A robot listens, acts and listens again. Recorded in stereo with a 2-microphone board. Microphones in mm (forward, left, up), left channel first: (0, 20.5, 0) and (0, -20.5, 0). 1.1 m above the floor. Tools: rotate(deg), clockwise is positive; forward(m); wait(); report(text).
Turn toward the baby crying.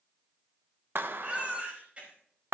rotate(35)
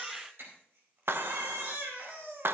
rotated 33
rotate(110)
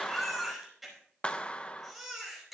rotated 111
report("Facing the baby crying, over 4 m away.")